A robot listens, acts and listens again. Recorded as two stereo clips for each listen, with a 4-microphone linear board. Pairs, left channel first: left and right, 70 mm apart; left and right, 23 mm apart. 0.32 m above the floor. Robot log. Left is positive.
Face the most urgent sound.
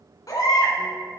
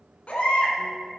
note: The baby crying: about 55° left or 125° left.
cmd yaw +55
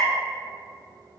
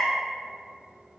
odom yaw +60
end: Found it: a baby crying, straight ahead, 1 to 2 m away.